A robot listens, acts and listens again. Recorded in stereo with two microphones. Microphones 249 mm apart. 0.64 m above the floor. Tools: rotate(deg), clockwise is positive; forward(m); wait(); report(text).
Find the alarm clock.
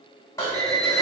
rotate(70)
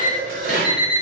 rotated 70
report("Found it: an alarm clock, straight ahead, 1 to 2 m away.")